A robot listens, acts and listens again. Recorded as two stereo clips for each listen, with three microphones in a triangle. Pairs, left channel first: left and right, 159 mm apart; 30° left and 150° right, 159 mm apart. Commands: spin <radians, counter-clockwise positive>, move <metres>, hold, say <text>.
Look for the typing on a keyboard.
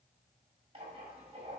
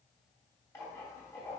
hold
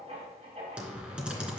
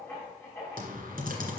spin -3.05
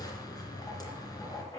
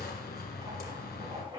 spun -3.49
spin 0.44
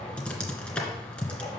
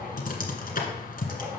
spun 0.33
say Facing the typing on a keyboard, 1 to 2 m away.